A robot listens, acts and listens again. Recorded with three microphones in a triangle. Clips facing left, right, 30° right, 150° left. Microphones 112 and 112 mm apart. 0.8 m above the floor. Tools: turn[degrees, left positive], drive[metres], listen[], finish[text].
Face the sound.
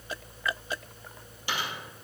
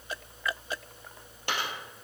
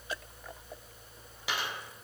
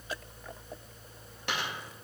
Thought: The dropped coin: 115° right.
Action: turn[-115]
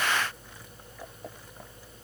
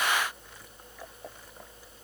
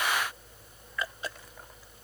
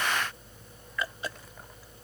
Action: finish[Facing where the dropped coin came from. I can't hear it now.]